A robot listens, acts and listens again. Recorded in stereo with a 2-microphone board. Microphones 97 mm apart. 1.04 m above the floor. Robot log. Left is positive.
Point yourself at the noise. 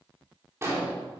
note: The explosion: about 30° right or 150° right.
cmd yaw -30
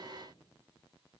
cmd idle
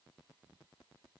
end: I heard an explosion, but can't make it out now. It was about straight ahead or 120° right.